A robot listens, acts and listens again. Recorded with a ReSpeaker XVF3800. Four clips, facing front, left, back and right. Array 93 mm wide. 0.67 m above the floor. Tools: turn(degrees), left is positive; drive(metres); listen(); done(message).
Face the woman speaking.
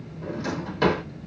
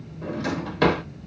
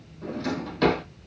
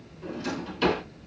listen()
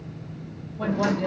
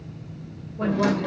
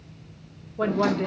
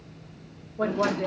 turn(degrees=-170)
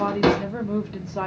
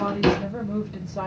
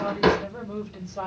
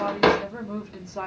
turn(degrees=-15)
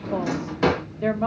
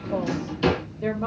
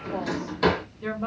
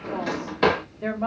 turn(degrees=-25)
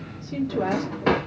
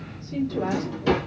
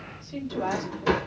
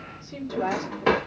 turn(degrees=-10)
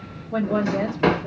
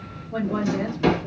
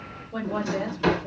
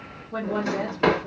done("Found it: a woman speaking, straight ahead, 1 to 2 m away.")